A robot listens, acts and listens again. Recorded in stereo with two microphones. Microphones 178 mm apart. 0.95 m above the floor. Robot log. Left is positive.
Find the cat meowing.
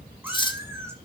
cmd yaw -30
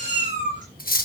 note: So it is at 135° right.
cmd yaw -135
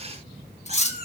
note: The cat meowing is now 35° right.
cmd yaw -35
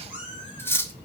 note: The cat meowing is now 10° right.
cmd yaw -10
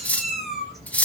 end: Found it: a cat meowing, straight ahead, over 4 m away.